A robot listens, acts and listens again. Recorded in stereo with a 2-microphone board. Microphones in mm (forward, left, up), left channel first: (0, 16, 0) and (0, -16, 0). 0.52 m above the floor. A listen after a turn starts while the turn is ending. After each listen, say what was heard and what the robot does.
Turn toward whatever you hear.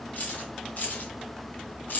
The keys jangling: about 65° left or 115° left. Turn 65° left.
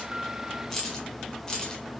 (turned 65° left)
So it is at 25° left. Turn 25° left.
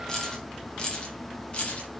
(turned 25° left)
The keys jangling is now 40° left. Turn 40° left.
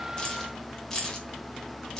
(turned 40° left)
The keys jangling is now 20° left. Turn 20° left.
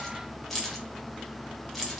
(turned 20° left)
Facing the keys jangling, 1 to 2 m away.